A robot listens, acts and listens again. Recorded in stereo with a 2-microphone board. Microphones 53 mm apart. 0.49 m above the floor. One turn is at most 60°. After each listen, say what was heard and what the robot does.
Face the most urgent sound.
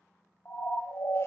The siren: about 55° left or 125° left. Turn 55° left.
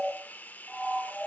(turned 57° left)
Found it: a siren, straight ahead, 2 to 4 m away.